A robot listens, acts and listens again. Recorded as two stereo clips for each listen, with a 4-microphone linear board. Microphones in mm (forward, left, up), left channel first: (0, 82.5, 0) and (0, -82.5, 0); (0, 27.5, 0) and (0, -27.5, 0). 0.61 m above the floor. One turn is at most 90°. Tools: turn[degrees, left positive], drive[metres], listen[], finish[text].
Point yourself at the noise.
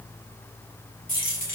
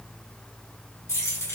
Thought: The keys jangling: about 55° left or 125° left.
Action: turn[55]
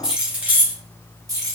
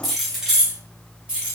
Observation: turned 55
Thought: So it is at 20° right.
Action: turn[-20]
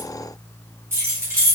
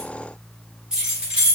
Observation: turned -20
Thought: The keys jangling is now 20° right.
Action: turn[-20]
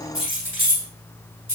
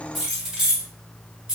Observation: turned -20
Thought: The keys jangling is now 15° right.
Action: turn[-15]
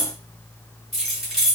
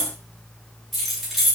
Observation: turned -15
Action: finish[Facing the keys jangling, 2 to 4 m away.]